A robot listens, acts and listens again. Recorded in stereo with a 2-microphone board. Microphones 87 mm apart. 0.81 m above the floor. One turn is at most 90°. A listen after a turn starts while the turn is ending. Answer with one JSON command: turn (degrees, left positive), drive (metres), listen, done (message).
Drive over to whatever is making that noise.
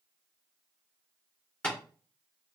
{"turn": 15}
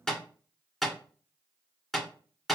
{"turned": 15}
{"drive": 1.0}
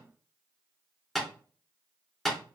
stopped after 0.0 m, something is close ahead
{"done": "Something is in my way. I am facing the tapping but have not reached it."}